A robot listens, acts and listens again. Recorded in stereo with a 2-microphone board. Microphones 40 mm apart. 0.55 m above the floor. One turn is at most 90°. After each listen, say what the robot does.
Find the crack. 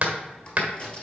Turn 30° left.
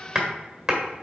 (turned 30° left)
Keep listening.
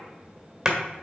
I heard a crack, but can't make it out now. It was about straight ahead or 120° left.